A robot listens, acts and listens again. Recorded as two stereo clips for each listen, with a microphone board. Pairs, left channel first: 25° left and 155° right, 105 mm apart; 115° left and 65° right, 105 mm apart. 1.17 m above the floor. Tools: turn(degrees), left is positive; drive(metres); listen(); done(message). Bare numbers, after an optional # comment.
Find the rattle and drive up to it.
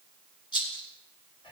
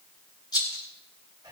# The rattle: 65° left.
turn(65)
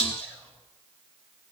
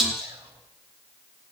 # The rattle is now 20° left.
turn(20)
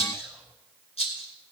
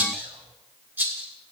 drive(1.0)
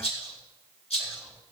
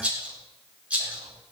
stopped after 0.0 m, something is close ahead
# The rattle is now 10° left.
turn(10)
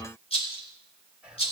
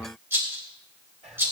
done("Something is in my way. I am facing the rattle but have not reached it.")